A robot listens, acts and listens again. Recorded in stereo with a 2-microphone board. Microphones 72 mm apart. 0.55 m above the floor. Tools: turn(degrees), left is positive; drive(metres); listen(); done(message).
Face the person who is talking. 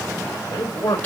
turn(degrees=65)
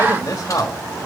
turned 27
turn(degrees=50)
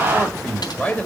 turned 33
turn(degrees=15)
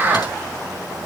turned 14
listen()
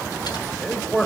done("Facing the man speaking.")